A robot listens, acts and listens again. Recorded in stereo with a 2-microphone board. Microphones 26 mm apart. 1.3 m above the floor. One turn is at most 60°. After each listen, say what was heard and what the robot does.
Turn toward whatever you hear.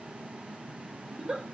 The giggle: about 30° right or 150° right. Turn 30° right.
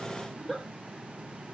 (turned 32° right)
Facing the giggle.